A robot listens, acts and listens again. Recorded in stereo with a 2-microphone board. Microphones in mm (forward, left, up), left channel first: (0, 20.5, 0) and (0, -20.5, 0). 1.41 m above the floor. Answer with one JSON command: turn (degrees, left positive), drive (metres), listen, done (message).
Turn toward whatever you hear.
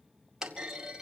{"turn": -30}
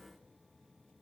{"listen": true}
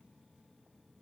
{"done": "I heard a clunk, but can't make it out now. It was about 15° left or 135° right."}